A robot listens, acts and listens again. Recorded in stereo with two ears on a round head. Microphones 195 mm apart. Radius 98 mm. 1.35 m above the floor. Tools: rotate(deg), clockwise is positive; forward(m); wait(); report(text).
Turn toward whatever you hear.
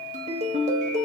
rotate(35)
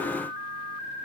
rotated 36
wait()
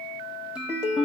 report("Facing the ringtone.")